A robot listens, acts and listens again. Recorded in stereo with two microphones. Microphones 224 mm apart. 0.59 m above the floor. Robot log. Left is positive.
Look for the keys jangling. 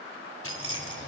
cmd yaw +90
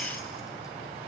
cmd idle
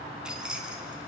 cmd idle
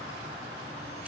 end: I heard keys jangling from this way, but can't make it out now.